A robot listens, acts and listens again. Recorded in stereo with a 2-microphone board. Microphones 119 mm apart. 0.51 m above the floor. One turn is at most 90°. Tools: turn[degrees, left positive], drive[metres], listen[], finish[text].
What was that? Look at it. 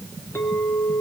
Thought: The clink: about 20° left or 160° left.
Action: turn[20]
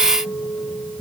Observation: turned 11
Thought: So it is at 10° left.
Action: turn[10]
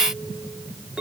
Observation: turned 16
Action: finish[Facing the clink, over 4 m away.]